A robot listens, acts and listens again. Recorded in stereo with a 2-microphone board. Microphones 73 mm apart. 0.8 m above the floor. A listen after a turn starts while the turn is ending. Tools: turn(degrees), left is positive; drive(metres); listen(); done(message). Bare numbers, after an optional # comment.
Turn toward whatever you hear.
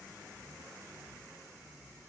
listen()
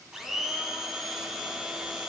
turn(-30)
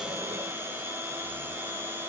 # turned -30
# So it is at 145° right.
turn(-145)
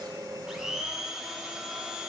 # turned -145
done("Facing the blender, 2 to 4 m away.")